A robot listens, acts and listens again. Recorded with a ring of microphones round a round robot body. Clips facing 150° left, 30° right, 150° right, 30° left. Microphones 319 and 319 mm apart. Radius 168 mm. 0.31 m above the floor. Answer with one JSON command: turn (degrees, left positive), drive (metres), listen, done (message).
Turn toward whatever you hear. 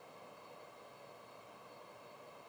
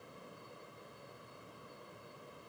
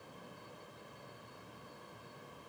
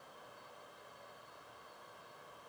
{"listen": true}
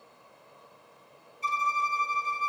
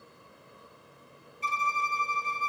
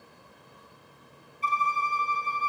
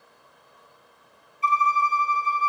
{"turn": -45}
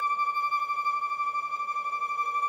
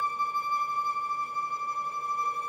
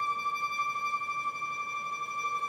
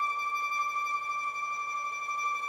{"done": "Facing the violin, 2 to 4 m away."}